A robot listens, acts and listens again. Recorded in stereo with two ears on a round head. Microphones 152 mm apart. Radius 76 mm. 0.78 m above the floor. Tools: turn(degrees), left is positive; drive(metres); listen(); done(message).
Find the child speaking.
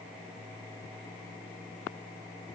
listen()
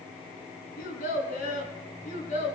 turn(degrees=45)
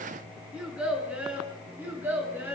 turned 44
turn(degrees=-15)
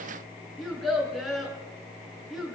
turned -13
done("Found it: a child speaking, straight ahead.")